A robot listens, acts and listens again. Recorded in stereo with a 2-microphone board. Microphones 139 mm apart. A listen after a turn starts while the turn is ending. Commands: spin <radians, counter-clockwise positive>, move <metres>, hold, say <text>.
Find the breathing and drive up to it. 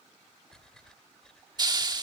spin 0.52
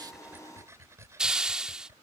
spin -0.35
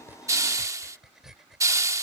move 1.0
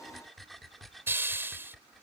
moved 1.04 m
move 1.0
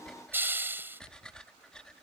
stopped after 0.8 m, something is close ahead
say I am next to the breathing.